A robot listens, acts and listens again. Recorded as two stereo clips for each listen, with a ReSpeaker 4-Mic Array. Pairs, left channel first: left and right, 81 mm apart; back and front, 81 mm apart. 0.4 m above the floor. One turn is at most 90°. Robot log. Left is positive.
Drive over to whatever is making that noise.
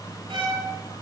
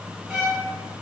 note: The violin: 80° right.
cmd yaw -80
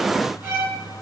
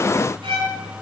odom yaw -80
note: The violin is now 20° right.
cmd yaw -20
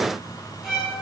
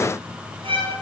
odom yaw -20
cmd fwd 1.0
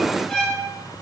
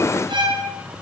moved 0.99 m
cmd fwd 1.0
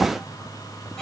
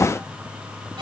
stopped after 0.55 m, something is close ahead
cmd idle
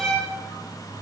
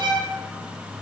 end: Arrived at the violin, straight ahead.